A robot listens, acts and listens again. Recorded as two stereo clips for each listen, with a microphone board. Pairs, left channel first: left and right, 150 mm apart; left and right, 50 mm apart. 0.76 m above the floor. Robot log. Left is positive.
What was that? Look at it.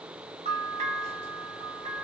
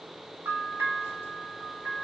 note: The bell: about 45° right or 135° right.
cmd yaw -45
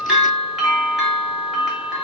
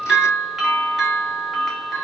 end: Found it: a bell, straight ahead.